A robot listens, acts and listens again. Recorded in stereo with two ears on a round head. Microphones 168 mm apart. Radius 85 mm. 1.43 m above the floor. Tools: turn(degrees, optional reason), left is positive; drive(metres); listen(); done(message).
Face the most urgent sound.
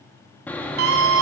turn(degrees=-90)
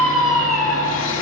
done("Facing the scream.")